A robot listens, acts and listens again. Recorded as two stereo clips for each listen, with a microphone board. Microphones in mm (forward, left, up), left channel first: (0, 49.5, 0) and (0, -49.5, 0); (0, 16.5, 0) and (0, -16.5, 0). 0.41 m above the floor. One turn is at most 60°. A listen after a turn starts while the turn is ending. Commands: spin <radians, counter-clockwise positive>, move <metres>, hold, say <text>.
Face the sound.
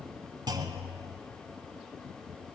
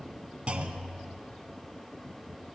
spin -0.79
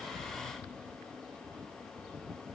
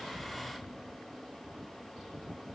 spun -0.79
hold
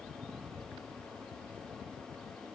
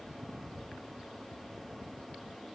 say I heard a clunk, but can't make it out now. It was about straight ahead or 90° right.